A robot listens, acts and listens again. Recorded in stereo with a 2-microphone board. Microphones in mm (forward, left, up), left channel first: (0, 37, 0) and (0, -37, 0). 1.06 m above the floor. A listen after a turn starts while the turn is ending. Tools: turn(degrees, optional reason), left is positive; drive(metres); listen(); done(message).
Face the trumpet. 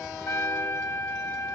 turn(degrees=40, reason="The trumpet: about 40° left or 140° left.")
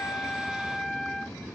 done("Found it: a trumpet, straight ahead.")